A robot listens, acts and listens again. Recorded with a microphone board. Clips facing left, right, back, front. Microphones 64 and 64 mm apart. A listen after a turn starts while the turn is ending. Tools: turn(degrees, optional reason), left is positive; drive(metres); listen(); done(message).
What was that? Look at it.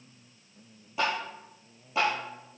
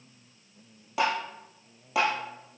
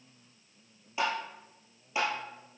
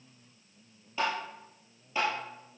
turn(degrees=-100, reason="The tapping: 100° right.")
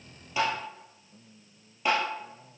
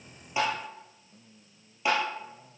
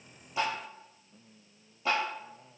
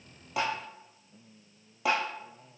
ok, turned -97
done("Facing the tapping.")